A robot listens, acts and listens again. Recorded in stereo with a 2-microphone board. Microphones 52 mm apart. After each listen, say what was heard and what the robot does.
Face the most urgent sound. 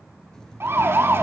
The siren: about 50° right or 130° right. Turn 50° right.
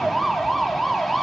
Facing the siren, 2 to 4 m away.